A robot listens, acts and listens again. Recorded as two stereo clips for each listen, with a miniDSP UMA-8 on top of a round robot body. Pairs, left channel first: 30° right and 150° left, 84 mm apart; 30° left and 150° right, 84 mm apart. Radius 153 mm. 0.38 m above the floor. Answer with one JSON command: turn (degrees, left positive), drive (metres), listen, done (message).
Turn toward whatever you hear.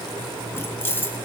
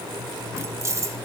{"turn": -95}
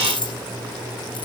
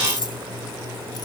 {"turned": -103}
{"done": "Facing the keys jangling."}